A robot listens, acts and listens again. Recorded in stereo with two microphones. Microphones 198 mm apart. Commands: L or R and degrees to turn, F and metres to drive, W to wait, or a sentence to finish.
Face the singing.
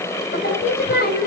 L55
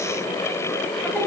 W
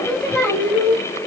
Found it: singing, straight ahead, over 4 m away.